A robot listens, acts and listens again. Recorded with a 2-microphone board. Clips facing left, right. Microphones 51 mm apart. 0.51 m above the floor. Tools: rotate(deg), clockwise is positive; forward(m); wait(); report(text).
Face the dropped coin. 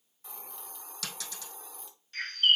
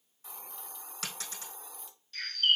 rotate(35)
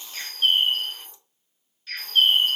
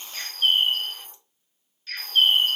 wait()
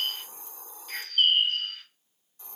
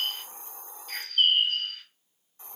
report("I heard a dropped coin, but can't make it out now. It was about straight ahead or 110° right.")